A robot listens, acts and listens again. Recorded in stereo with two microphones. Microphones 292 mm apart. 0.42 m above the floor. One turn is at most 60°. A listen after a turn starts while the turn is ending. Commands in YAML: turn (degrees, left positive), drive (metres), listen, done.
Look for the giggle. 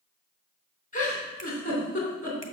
turn: 25
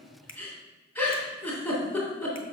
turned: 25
done: "Found it: a giggle, straight ahead."